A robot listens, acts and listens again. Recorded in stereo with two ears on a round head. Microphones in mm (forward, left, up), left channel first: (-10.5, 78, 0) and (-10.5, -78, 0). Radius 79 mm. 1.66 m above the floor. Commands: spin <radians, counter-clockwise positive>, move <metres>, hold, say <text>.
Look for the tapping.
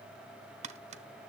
spin -0.70
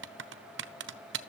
spin -1.75
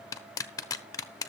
spin 0.35
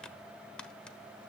say Facing the tapping, under 1 m away.